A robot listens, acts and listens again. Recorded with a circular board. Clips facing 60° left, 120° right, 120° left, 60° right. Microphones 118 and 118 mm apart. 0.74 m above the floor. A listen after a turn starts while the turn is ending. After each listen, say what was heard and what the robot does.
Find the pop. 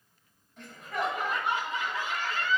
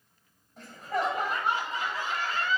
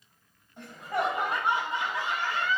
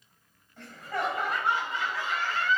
Keep listening.
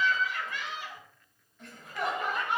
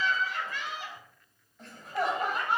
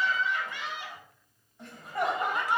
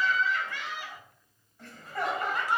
Keep listening.
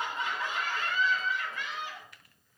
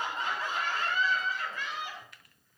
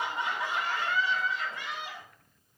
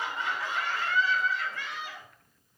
I can't make out a pop to turn to.